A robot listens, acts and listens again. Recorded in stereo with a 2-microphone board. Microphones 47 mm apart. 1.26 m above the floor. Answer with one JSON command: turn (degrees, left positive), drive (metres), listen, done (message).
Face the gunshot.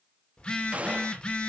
{"turn": -30}
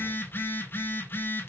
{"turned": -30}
{"listen": true}
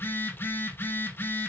{"done": "I heard a gunshot, but can't make it out now. It was about straight ahead or 120° right."}